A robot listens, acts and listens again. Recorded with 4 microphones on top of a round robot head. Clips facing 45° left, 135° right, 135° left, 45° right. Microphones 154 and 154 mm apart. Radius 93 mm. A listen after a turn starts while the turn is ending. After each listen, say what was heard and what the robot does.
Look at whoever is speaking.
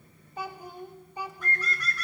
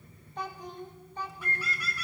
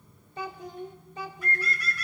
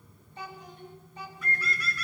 The child speaking: 125° left. Turn 125° left.
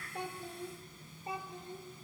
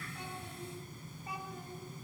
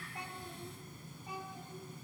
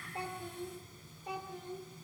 The child speaking is now 20° right. Turn 20° right.
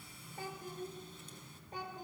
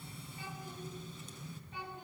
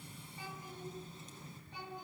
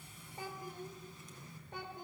Found it: a child speaking, straight ahead, 2 to 4 m away.